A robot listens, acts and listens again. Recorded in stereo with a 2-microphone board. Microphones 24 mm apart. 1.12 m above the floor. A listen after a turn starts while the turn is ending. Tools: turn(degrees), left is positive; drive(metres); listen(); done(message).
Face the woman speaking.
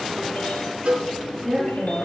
turn(degrees=-30)
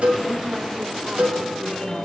listen()
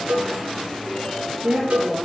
turn(degrees=-135)
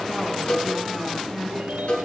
turn(degrees=10)
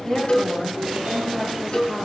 done("Facing the woman speaking.")